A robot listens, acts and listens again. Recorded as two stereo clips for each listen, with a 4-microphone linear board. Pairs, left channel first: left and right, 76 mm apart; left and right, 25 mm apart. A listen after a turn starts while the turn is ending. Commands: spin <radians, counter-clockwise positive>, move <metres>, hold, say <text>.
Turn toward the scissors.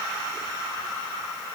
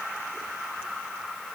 hold
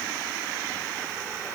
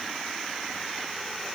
hold
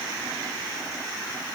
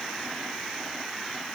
say I can't make out scissors to turn to.